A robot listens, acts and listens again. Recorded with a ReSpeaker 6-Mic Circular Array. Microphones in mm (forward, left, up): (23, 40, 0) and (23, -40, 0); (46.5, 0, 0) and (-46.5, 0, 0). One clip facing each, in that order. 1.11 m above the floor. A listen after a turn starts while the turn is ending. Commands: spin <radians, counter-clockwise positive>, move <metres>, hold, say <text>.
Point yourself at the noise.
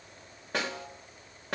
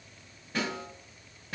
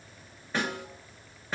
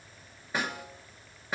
spin 1.75
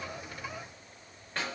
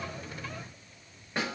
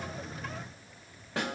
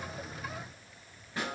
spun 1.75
spin -0.26
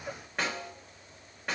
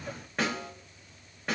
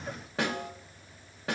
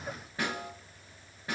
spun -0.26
say Facing the snare drum, 1 to 2 m away.